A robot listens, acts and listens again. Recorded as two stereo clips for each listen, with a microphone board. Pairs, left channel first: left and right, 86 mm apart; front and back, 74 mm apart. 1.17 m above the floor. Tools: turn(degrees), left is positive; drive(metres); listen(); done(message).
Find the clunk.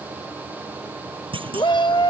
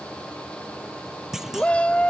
turn(degrees=-95)
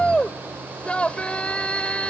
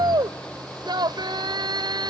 done("I heard a clunk from this way, but can't make it out now.")